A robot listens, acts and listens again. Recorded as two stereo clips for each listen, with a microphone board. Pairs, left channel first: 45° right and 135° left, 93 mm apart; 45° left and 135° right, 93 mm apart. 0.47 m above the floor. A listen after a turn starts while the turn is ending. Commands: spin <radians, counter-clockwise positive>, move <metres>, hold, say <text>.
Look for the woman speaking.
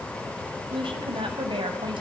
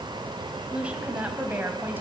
spin 2.71
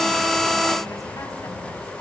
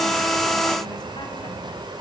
hold
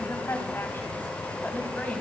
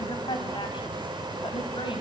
spin 0.26
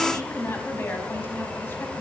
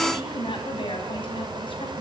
spin 0.35
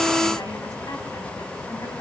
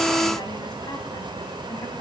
hold
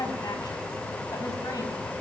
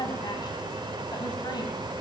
hold
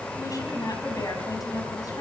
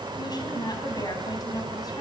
say Found it: a woman speaking, straight ahead.